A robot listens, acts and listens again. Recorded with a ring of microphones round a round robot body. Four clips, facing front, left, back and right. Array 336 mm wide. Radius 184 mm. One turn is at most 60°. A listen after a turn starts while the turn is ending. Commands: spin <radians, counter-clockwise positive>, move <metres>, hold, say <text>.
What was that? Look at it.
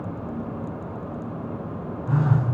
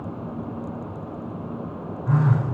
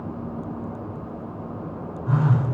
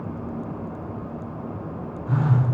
spin 1.05
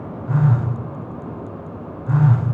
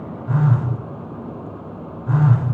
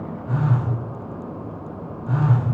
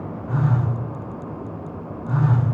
spin 1.05
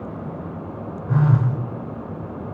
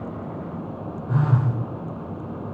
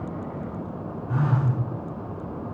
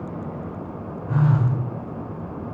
spin 0.44
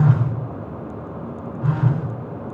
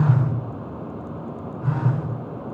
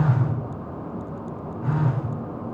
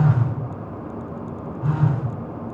say Facing the phone buzzing.